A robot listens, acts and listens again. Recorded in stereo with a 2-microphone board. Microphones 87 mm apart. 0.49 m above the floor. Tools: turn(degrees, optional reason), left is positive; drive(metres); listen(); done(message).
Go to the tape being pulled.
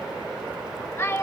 listen()
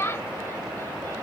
listen()
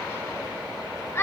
done("I can't make out tape being pulled, only a child speaking.")